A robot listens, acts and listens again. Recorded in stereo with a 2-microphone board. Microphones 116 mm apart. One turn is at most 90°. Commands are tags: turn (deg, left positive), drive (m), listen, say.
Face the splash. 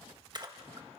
<turn deg="-40"/>
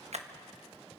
<turn deg="-90"/>
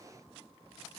<turn deg="-15"/>
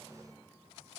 <say>Facing where the splash came from. I can't hear it now.</say>